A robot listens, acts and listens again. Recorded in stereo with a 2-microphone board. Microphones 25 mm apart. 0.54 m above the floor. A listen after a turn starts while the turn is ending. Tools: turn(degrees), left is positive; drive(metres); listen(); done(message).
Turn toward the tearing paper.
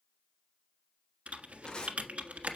turn(degrees=40)
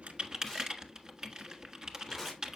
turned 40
done("Found it: tearing paper, straight ahead.")